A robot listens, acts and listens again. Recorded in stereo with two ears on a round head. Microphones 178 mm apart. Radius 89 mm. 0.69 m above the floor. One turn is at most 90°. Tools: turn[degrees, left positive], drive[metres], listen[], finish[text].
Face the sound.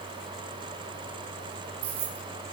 Thought: The keys jangling: about 65° right or 115° right.
Action: turn[-65]
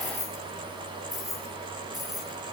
Action: finish[Facing the keys jangling.]